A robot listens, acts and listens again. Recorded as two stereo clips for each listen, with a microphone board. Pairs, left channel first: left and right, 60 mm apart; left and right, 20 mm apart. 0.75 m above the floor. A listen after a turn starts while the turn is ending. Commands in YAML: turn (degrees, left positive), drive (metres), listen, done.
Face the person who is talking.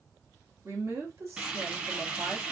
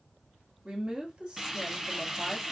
turn: -55
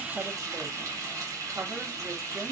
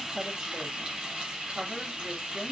listen: true
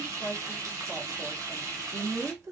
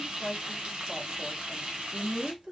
turn: -65
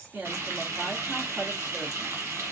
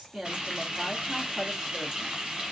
listen: true
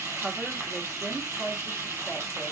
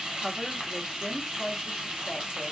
turn: -15
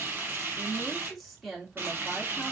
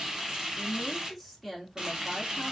done: "Found it: a woman speaking, straight ahead, 1 to 2 m away."